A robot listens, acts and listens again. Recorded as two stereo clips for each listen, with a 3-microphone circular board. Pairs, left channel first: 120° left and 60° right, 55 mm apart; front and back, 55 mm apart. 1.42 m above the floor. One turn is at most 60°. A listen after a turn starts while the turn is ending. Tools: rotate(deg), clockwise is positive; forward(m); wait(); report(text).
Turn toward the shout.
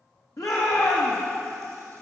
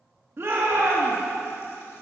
rotate(-60)
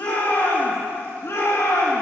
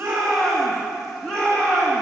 rotate(-60)
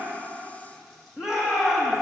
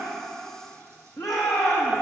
rotate(-20)
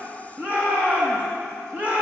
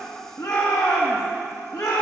report("Facing the shout.")